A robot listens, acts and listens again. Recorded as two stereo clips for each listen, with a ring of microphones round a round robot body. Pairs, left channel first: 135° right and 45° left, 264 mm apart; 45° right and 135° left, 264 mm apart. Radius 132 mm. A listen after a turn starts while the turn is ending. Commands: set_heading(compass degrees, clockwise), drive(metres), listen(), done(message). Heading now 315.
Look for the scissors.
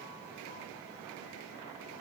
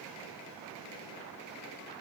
listen()
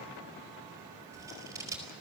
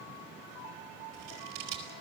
set_heading(190)
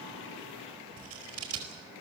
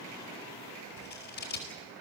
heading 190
set_heading(180)
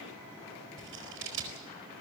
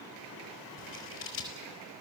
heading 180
done("Facing the scissors.")